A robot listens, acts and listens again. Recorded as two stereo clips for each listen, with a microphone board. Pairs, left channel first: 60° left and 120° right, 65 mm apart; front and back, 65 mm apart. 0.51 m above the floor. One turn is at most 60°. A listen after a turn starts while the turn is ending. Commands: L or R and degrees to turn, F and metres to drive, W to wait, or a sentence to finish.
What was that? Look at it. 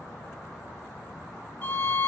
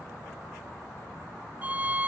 L60
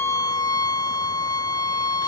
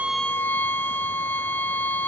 L60
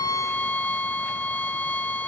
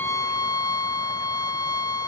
Found it: a violin, straight ahead.